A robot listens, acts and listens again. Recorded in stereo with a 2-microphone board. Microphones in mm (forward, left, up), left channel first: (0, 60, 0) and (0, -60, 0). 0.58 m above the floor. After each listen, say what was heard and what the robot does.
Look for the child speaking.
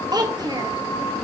The child speaking: about 35° right or 145° right. Turn 35° right.
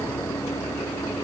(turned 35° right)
Keep listening.
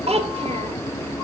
So it is at 105° right. Turn 105° right.
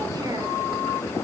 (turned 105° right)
Keep listening.
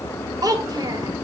The child speaking is now 35° right. Turn 35° right.
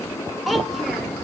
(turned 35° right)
Found it: a child speaking, straight ahead.